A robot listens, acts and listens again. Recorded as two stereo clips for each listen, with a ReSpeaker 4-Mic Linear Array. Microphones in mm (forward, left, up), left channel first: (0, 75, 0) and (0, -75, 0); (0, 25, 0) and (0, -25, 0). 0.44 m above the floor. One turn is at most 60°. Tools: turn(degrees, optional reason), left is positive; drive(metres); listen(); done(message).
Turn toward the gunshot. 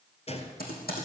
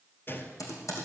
turn(degrees=45, reason="The gunshot: about 45° left or 135° left.")
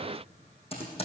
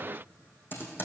listen()
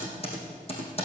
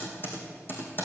done("I heard a gunshot, but can't make it out now. It was about straight ahead or 90° left.")